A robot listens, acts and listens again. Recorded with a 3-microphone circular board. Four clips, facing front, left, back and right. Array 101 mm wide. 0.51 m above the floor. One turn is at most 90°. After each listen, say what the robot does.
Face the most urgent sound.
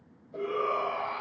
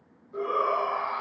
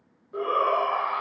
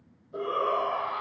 Turn 90° left.
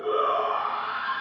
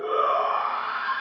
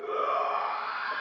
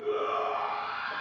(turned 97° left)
Turn 70° left.
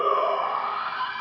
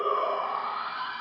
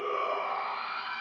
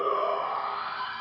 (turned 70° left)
Found it: a shout, straight ahead, 2 to 4 m away.